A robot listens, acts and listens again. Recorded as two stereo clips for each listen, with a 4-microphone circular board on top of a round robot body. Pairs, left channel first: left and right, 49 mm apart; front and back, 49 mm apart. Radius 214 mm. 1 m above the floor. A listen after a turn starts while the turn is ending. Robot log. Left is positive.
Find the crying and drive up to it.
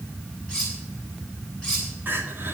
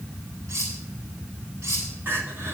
note: The crying: 140° right.
cmd yaw -140
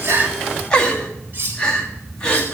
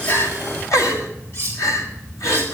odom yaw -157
note: The crying is now 20° left.
cmd yaw +20
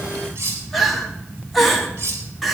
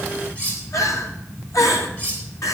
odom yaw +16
cmd fwd 1.0
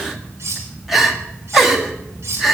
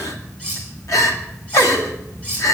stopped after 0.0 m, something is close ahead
end: Blocked. The crying is further on, straight ahead.